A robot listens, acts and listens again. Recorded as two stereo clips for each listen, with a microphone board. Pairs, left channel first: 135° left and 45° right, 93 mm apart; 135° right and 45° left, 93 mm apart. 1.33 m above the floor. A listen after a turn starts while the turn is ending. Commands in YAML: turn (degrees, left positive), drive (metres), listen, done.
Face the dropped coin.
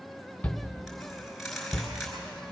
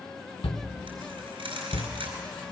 turn: 45
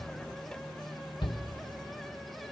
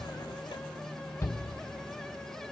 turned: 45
done: "I heard a dropped coin from this way, but can't make it out now."